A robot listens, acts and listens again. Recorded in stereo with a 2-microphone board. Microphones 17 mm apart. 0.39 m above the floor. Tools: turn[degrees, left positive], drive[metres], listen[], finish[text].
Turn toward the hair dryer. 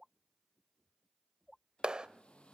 Action: turn[90]
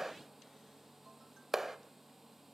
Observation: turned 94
Thought: So it is at 10° right.
Action: turn[-10]
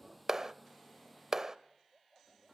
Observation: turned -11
Action: finish[Found it: a hair dryer, straight ahead.]